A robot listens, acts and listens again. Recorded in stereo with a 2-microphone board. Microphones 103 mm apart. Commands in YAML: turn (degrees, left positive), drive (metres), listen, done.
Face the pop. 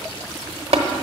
listen: true
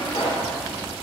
turn: 60
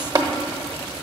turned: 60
listen: true
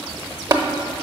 done: "I heard a pop, but can't make it out now. It was about straight ahead or 60° left."